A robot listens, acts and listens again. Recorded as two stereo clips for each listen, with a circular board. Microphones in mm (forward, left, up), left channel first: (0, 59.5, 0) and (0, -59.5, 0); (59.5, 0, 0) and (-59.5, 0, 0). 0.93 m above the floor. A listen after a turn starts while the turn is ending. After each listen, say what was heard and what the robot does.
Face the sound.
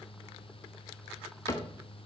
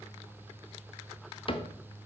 The cupboard door: 30° left. Turn 30° left.
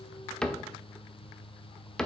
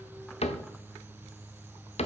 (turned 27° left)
Facing the cupboard door.